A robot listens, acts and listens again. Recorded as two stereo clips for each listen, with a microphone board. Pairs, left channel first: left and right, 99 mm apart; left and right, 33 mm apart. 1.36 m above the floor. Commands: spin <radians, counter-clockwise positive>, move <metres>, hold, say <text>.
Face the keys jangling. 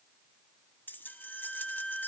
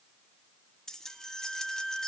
spin 0.35
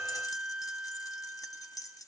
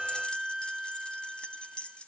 spin 2.44
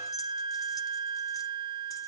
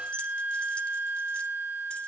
hold
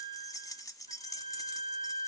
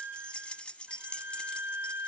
spin 0.61
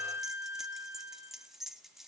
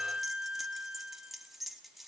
say Facing the keys jangling, 1 to 2 m away.